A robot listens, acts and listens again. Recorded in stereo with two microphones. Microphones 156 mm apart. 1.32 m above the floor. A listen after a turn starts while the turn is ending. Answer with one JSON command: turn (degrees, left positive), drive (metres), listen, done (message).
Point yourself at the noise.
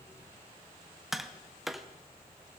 {"turn": 30}
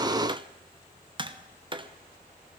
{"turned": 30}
{"turn": -30}
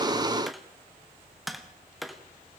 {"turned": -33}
{"done": "Facing the tapping."}